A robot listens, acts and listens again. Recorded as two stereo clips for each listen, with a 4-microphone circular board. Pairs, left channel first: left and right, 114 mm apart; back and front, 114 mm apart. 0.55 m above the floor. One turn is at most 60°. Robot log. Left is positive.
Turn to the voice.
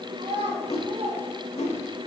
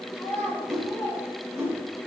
note: The child speaking: 115° right.
cmd yaw -60
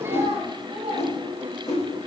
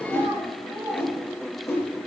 note: The child speaking is now 65° right.
cmd yaw -60
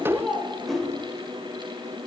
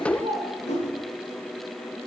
end: Found it: a child speaking, straight ahead.